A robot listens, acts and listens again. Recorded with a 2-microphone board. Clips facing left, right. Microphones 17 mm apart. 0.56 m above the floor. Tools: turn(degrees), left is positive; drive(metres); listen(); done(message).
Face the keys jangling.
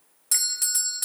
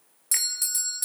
listen()
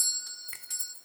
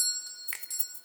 turn(degrees=-75)
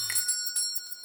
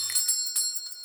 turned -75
turn(degrees=-25)
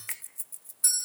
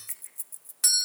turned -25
turn(degrees=10)
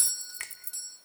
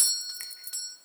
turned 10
done("Found it: keys jangling, straight ahead.")